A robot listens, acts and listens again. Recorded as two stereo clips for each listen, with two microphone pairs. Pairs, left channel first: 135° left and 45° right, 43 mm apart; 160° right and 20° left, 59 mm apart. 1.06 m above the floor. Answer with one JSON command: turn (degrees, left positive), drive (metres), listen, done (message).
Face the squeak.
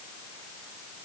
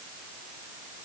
{"listen": true}
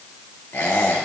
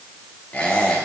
{"turn": 140}
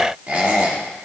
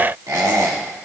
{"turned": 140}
{"turn": 10}
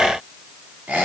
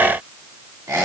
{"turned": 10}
{"done": "Found it: a squeak, straight ahead."}